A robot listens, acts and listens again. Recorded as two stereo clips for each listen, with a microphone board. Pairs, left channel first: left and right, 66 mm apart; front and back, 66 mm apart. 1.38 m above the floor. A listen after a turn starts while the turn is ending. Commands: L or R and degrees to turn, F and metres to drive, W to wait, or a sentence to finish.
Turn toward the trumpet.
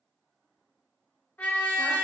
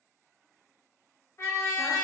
L35
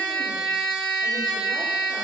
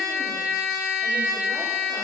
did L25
L10
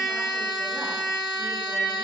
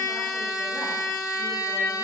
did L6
Found it: a trumpet, straight ahead, under 1 m away.